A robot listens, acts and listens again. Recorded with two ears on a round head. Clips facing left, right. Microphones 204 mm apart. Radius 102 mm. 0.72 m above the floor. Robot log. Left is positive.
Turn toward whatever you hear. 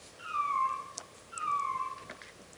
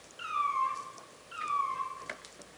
cmd yaw -90
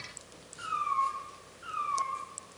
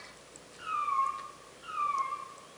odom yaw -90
note: So it is at 20° left.
cmd yaw +20
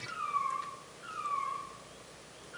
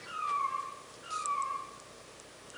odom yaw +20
end: Found it: a cat meowing, straight ahead, over 4 m away.